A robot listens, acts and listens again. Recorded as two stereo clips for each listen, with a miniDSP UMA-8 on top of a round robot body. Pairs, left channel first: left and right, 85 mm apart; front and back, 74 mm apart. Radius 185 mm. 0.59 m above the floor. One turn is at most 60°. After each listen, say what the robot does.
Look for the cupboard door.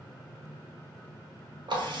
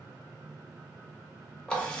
Keep listening.
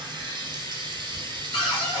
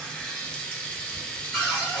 Turn 60° left.
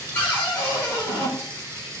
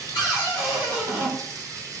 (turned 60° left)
Turn 25° left.
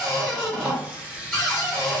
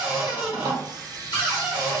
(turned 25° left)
Facing the cupboard door, under 1 m away.